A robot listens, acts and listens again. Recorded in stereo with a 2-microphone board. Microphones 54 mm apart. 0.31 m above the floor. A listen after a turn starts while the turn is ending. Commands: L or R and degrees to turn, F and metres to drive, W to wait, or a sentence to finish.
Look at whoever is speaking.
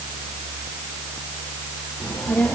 L30
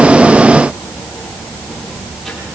Found it: a child speaking, straight ahead.